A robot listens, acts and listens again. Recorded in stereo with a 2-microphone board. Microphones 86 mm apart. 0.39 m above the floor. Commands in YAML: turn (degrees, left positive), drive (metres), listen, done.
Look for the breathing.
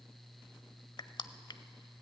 listen: true
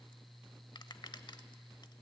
listen: true
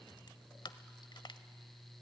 done: "I can't make out breathing, only crushing."